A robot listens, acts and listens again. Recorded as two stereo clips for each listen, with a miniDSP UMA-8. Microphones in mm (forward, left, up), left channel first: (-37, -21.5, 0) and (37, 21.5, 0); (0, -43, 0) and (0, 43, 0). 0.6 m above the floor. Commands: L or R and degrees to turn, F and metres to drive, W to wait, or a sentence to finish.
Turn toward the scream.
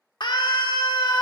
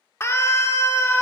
R145
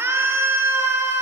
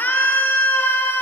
R25
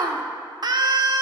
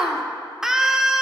Found it: a scream, straight ahead, 1 to 2 m away.